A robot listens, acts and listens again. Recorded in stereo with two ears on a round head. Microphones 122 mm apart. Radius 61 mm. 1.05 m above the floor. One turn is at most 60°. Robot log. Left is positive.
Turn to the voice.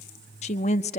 note: The woman speaking: about 55° left or 125° left.
cmd yaw +55
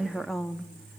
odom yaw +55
end: Found it: a woman speaking, straight ahead.